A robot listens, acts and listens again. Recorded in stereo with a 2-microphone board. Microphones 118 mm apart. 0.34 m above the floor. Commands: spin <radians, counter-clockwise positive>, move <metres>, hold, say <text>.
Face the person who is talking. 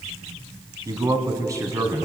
spin -0.52
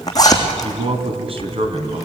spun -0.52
spin -2.09
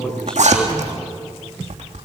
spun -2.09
spin 0.17
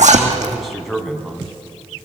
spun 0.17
say Facing the man speaking.